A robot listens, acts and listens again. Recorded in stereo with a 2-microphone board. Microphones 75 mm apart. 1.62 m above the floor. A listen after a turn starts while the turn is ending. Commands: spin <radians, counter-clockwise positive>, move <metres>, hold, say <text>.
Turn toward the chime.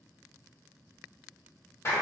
hold
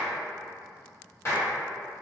hold
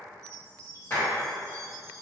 spin -0.79
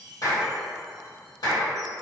hold
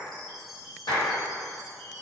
say Facing the chime, 1 to 2 m away.